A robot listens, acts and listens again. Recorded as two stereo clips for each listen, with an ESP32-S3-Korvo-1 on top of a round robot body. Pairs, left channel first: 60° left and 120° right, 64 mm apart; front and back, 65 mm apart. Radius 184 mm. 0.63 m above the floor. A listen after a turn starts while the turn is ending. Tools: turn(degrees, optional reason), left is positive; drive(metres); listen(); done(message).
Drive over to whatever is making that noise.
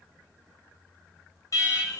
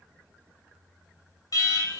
turn(degrees=25, reason="The alarm: 25° left.")
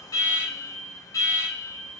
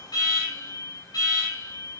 turn(degrees=20, reason="The alarm is now 20° left.")
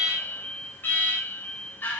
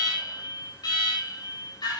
drive(metres=1.0)
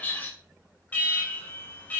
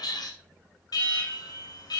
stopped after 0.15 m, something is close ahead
done("Blocked. The alarm is further on, straight ahead.")